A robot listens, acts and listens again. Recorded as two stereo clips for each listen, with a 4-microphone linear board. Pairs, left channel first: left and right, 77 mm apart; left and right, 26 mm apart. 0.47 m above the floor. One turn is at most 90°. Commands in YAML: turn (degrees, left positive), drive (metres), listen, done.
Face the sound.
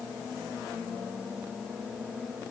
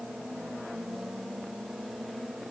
listen: true
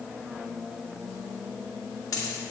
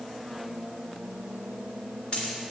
turn: 55
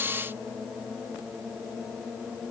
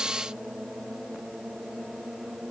listen: true
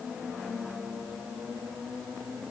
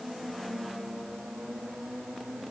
done: "I heard a dropped coin, but can't make it out now. It was about straight ahead or 70° left."